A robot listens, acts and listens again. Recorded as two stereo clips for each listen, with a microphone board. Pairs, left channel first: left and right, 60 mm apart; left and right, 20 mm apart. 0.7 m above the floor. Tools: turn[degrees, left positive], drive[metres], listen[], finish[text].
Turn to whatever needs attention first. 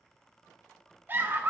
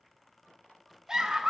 Thought: The scream: about 30° right or 150° right.
Action: turn[-30]
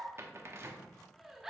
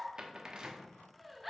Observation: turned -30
Action: finish[Facing the scream.]